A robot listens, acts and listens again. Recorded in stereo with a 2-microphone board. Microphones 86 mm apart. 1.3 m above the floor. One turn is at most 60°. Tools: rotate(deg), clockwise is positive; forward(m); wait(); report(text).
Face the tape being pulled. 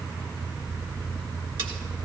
wait()
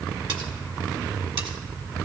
wait()
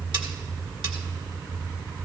report("I can't make out tape being pulled to turn to.")